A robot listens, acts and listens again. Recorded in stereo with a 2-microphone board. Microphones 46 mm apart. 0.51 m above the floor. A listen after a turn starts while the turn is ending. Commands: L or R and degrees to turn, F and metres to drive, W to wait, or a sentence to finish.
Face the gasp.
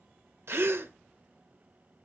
R70
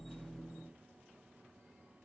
W
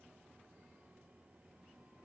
I heard a gasp, but can't make it out now. It was about straight ahead or 40° right.